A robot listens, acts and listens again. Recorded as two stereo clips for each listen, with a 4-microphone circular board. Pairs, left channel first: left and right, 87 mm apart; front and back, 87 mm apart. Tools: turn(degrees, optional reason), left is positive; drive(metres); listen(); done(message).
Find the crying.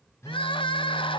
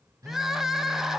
turn(degrees=95, reason="The crying: 95° left.")
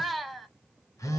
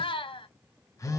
done("Facing the crying, under 1 m away.")